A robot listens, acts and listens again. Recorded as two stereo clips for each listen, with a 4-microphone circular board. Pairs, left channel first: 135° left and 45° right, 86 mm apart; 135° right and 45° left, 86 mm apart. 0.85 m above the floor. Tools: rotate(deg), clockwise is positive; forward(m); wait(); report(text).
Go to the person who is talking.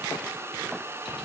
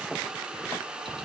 wait()
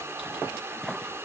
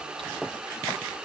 wait()
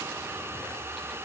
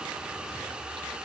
report("I can't make out anyone speaking.")